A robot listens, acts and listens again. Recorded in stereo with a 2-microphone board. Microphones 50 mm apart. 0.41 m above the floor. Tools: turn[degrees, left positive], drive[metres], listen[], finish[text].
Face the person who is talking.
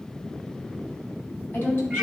Thought: The woman speaking: about 45° left or 135° left.
Action: turn[45]
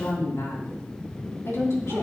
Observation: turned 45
Thought: So it is at 85° left.
Action: turn[85]
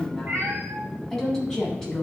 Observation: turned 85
Thought: The woman speaking is now 10° left.
Action: turn[10]
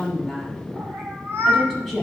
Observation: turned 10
Action: finish[Facing the woman speaking.]